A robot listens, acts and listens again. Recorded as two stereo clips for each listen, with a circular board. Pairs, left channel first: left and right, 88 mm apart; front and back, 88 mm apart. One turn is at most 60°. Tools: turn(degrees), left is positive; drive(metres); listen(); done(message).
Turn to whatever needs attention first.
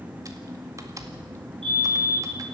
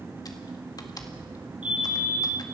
turn(degrees=-60)
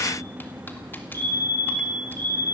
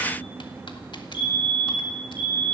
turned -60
turn(degrees=-40)
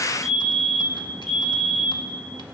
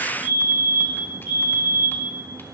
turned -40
done("Found it: a fire alarm, straight ahead.")